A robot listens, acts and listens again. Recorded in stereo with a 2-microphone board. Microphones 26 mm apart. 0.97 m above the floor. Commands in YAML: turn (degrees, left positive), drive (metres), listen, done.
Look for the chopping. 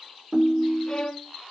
listen: true
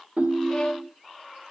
listen: true
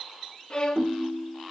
done: "I can't make out chopping, only a violin and a ringtone."